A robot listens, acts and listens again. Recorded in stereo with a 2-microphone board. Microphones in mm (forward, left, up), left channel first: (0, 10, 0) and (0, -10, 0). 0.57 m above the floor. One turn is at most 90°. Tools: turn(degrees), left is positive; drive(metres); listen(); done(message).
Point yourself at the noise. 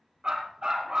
turn(degrees=-40)
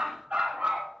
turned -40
turn(degrees=-90)
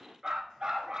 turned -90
turn(degrees=-30)
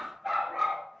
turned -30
done("Facing the dog barking.")